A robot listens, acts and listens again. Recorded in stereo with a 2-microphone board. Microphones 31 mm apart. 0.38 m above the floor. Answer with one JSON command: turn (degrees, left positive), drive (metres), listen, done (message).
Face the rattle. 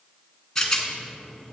{"turn": 30}
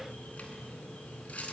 {"listen": true}
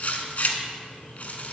{"turn": 135}
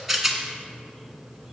{"done": "Facing the rattle."}